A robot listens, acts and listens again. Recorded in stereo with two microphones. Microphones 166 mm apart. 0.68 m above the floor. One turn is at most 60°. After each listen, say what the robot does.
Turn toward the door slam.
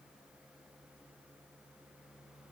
Keep listening.
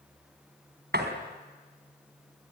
Turn 60° right.
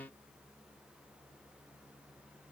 Keep listening.
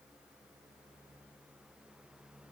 I heard a door slam, but can't make it out now. It was about 15° right or 45° right.